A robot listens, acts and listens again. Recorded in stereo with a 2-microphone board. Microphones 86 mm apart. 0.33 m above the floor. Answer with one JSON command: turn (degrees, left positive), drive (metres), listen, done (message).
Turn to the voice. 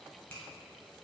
{"listen": true}
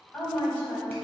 {"turn": 20}
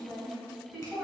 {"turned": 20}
{"done": "Facing the woman speaking."}